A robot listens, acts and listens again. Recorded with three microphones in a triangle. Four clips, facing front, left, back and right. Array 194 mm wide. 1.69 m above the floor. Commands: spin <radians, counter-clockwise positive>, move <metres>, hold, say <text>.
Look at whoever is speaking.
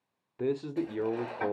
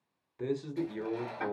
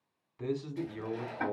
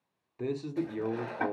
say Facing the man speaking.